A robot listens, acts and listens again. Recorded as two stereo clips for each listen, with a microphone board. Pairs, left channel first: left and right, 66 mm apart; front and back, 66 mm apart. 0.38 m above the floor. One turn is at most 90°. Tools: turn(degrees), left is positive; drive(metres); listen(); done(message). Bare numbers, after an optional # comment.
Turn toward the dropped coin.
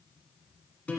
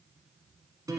listen()
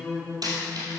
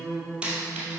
# The dropped coin: 105° right.
turn(-90)
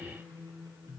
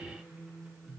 # Nothing new. It was at 15° right.
turn(-15)
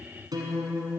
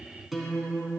done("I heard a dropped coin from this way, but can't make it out now.")